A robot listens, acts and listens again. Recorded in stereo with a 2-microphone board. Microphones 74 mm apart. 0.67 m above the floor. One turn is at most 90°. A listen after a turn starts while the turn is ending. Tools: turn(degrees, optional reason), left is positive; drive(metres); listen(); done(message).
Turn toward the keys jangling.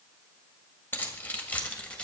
turn(degrees=15, reason="The keys jangling: about 15° left or 165° left.")
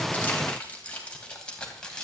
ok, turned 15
turn(degrees=30)
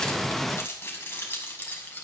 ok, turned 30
turn(degrees=90, reason="So it is at 155° left.")
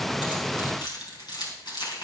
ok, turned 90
turn(degrees=80, reason="The keys jangling is now 80° left.")
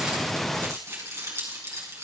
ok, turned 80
turn(degrees=-40, reason="The keys jangling is now 40° right.")
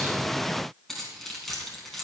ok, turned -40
done("Found it: keys jangling, straight ahead.")